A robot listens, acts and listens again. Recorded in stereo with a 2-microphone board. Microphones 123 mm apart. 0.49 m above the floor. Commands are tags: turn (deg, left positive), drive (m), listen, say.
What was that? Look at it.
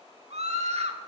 <turn deg="-70"/>
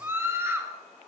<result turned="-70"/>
<turn deg="-20"/>
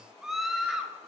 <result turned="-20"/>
<say>Found it: a scream, straight ahead, 1 to 2 m away.</say>